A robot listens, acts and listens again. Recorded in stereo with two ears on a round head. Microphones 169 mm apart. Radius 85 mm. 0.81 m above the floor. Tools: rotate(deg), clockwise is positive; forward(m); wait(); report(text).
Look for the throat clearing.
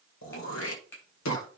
rotate(-90)
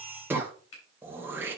rotate(10)
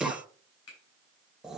report("Found it: throat clearing, straight ahead, 1 to 2 m away.")